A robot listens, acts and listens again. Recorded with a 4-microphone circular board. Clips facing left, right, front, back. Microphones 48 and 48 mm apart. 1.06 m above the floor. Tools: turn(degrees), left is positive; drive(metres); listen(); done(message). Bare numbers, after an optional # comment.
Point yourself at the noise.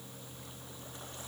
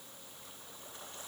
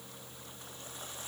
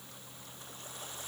listen()
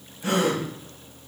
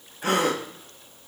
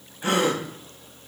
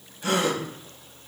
# The gasp: 60° right.
turn(-60)
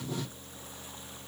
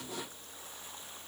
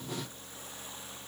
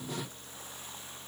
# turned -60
done("I heard a gasp from this way, but can't make it out now.")